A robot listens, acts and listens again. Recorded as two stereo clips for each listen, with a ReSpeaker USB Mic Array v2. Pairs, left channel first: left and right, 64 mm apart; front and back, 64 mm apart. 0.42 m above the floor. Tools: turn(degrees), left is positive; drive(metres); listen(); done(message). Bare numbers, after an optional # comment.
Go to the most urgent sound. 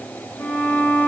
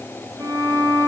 listen()
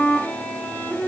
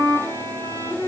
listen()
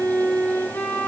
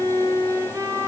done("I can't make out anything urgent to turn to.")